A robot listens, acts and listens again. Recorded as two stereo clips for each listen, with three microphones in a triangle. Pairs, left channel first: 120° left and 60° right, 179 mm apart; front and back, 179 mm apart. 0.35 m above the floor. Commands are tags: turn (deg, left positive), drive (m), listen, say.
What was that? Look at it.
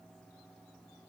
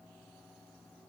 <listen/>
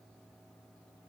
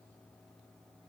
<listen/>
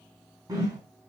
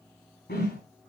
<turn deg="10"/>
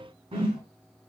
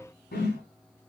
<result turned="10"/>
<say>Facing the whoosh.</say>